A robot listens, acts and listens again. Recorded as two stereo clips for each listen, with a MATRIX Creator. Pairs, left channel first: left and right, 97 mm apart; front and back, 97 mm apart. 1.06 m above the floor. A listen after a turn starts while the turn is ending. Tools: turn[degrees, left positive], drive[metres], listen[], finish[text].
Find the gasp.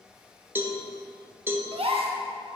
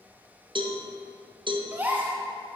Thought: The gasp: 110° right.
Action: turn[-110]
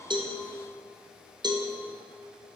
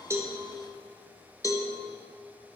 Action: finish[I heard a gasp from this way, but can't make it out now.]